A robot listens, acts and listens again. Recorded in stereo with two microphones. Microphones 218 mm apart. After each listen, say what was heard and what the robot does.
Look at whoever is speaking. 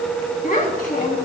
The child speaking: about 45° left or 135° left. Turn 45° left.
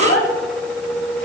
So it is at 90° left. Turn 90° left.
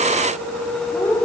The child speaking is now 10° left. Turn 10° left.
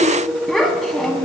Found it: a child speaking, straight ahead.